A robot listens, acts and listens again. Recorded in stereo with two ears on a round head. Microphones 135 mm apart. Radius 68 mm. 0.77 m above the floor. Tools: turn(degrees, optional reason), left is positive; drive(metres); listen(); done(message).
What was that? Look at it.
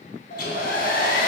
turn(degrees=75, reason="The hair dryer: about 75° left or 105° left.")
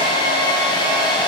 turn(degrees=30, reason="So it is at 30° left.")
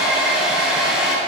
done("Found it: a hair dryer, straight ahead, 2 to 4 m away.")